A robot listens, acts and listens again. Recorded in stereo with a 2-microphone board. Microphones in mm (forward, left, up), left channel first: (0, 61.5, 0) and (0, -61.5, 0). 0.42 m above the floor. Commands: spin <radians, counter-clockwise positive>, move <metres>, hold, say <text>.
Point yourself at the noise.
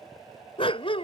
spin 0.79
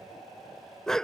say Facing the dog barking.